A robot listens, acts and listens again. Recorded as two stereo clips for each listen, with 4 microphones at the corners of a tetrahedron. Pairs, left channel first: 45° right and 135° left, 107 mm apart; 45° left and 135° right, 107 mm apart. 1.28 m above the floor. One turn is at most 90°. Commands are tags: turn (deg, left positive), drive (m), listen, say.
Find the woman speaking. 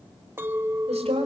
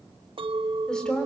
<turn deg="90"/>
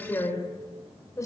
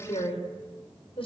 <turn deg="15"/>
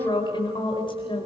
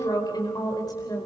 <turn deg="-10"/>
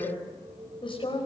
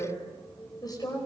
<turn deg="-10"/>
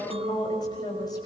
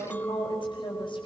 <say>Facing the woman speaking, over 4 m away.</say>